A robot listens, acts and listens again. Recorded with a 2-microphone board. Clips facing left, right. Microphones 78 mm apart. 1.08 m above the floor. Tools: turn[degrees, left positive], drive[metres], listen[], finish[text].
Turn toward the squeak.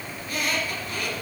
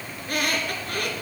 Thought: The squeak: about 50° right or 130° right.
Action: turn[-50]
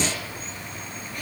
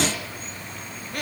Thought: So it is at 75° right.
Action: turn[-75]
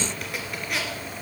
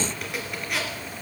Action: finish[Found it: a squeak, straight ahead, 2 to 4 m away.]